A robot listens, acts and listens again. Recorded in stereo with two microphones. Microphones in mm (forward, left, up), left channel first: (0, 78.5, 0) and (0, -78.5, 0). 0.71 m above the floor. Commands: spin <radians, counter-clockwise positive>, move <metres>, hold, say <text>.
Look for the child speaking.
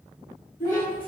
spin 1.05
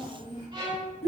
spin 0.70
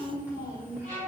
spin -0.26
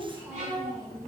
spin -0.35
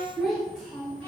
say Found it: a child speaking, straight ahead.